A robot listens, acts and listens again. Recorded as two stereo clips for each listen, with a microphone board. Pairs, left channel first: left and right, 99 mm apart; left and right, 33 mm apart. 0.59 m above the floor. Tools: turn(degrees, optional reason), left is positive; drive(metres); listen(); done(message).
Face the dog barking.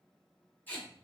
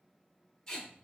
listen()
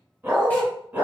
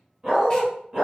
turn(degrees=-15, reason="The dog barking: about 15° right or 165° right.")
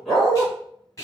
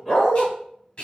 turn(degrees=30)
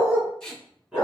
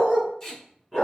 turn(degrees=-10, reason="So it is at 10° right.")
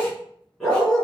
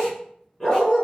done("Found it: a dog barking, straight ahead.")